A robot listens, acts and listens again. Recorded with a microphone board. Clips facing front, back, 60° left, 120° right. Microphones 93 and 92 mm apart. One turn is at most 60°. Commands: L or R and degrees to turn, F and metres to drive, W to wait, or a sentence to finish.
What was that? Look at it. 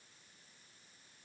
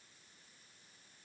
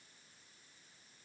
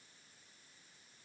W
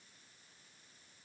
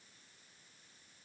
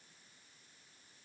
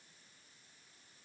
W
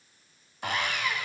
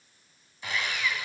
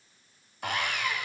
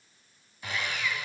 L35
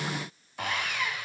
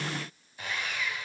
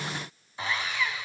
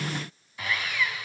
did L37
Facing the sawing.